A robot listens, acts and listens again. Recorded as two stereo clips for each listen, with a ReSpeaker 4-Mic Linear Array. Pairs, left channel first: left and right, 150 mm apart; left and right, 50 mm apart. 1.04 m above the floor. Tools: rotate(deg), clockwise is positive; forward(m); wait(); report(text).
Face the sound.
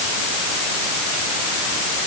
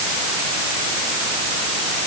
wait()
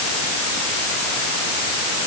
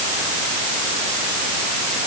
wait()
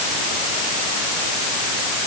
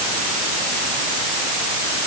report("I can't make out anything.")